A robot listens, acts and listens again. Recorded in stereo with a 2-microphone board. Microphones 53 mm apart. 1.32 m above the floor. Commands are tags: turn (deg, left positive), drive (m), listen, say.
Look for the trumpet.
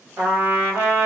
<turn deg="-65"/>
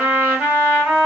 <turn deg="-25"/>
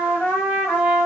<say>Found it: a trumpet, straight ahead.</say>